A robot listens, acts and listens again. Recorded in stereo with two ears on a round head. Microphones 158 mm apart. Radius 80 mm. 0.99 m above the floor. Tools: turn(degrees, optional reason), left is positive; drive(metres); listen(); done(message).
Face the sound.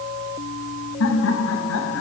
turn(degrees=90)
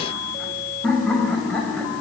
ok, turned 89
done("Found it: laughter, straight ahead, over 4 m away.")